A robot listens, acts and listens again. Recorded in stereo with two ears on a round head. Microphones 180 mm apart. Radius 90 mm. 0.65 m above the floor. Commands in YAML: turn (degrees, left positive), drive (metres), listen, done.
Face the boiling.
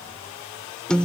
listen: true
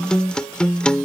listen: true
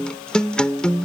done: "I can't make out boiling to turn to."